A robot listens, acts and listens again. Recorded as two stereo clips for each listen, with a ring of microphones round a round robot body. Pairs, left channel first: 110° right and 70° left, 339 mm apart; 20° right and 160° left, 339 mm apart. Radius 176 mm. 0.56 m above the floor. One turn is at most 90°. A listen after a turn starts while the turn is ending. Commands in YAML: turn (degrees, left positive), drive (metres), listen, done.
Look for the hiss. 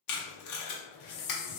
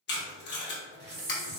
turn: -90
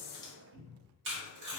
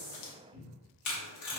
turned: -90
turn: -50
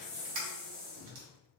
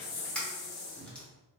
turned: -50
done: "Facing the hiss, under 1 m away."